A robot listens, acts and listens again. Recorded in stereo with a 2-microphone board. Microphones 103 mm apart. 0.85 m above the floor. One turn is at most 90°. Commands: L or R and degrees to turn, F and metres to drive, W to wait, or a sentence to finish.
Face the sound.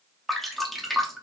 L30
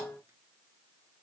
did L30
W
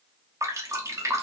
R30
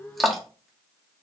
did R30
Found it: dripping, straight ahead, under 1 m away.